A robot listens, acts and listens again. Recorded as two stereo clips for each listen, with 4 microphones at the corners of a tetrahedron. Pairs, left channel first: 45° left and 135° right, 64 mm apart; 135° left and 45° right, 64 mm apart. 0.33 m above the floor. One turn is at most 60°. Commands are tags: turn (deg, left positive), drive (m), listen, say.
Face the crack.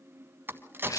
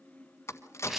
<turn deg="60"/>
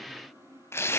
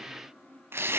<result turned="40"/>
<turn deg="60"/>
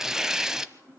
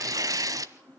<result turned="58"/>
<turn deg="60"/>
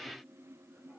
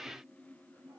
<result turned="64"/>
<turn deg="10"/>
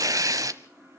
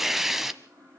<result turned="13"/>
<say>I heard a crack from this way, but can't make it out now.</say>